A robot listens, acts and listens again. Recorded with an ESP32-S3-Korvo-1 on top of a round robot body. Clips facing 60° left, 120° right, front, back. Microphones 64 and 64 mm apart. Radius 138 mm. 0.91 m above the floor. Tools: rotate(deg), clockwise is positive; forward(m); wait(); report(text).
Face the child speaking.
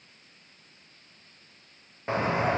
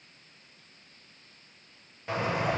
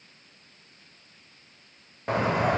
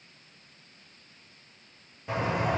wait()
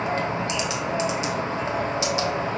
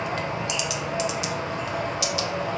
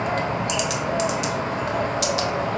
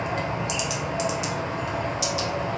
wait()
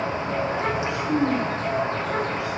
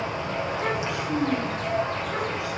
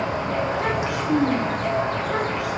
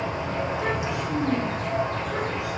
report("Facing the child speaking, 1 to 2 m away.")